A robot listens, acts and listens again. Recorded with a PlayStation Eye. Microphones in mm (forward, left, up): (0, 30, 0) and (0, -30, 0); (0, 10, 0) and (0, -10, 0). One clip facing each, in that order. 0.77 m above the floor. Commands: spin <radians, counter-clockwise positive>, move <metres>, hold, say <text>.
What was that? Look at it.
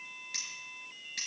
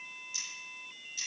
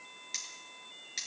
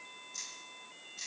spin 1.13
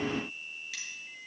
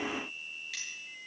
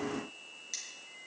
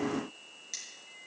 say Facing the cutlery clinking, over 4 m away.